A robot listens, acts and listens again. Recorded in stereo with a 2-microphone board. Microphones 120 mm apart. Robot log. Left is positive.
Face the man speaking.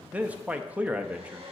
cmd yaw -30
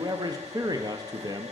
note: So it is at 140° right.
cmd yaw -140
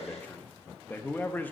note: The man speaking is now 20° left.
cmd yaw +20
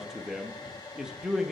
end: Facing the man speaking.